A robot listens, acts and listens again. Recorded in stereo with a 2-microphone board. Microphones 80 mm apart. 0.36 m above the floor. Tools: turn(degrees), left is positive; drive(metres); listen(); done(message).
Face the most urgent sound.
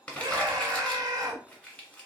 turn(degrees=-55)
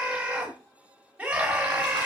turn(degrees=-20)
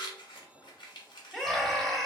done("Found it: a scream, straight ahead.")